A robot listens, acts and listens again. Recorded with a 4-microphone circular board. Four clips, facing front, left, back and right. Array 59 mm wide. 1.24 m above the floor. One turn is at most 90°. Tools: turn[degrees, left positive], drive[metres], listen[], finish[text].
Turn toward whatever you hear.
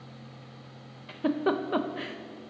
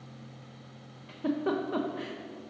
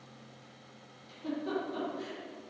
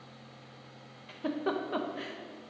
Action: finish[Found it: a giggle, straight ahead, 1 to 2 m away.]